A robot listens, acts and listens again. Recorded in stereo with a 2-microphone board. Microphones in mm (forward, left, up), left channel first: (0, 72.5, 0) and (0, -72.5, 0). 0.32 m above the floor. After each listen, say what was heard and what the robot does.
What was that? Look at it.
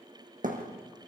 The thud: about 70° right or 110° right. Turn 70° right.
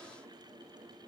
Keep listening.
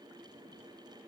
I heard a thud, but can't make it out now. It was about straight ahead or 40° right.